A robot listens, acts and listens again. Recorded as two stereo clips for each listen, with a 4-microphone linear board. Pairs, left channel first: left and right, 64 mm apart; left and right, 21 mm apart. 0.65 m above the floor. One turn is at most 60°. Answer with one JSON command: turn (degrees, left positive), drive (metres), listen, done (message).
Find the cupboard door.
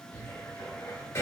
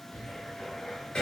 {"turn": 50}
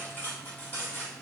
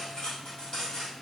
{"listen": true}
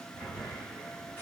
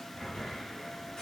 {"turn": 60}
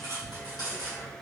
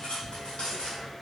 {"turn": 20}
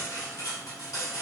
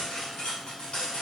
{"listen": true}
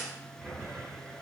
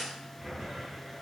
{"done": "Found it: a cupboard door, straight ahead."}